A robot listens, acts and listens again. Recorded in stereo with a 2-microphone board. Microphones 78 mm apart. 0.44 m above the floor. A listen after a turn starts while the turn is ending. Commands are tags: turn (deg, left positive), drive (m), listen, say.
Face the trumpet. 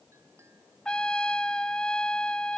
<turn deg="30"/>
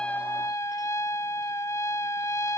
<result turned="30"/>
<turn deg="135"/>
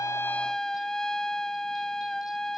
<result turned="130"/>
<turn deg="10"/>
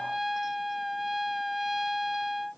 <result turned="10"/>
<say>Facing the trumpet.</say>